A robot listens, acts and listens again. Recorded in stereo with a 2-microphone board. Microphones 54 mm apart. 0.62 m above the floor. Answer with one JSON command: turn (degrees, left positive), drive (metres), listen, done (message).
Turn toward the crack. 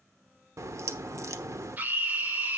{"turn": -70}
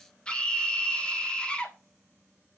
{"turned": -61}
{"listen": true}
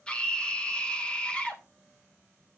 {"done": "I heard a crack, but can't make it out now. It was about 10° right or 50° right."}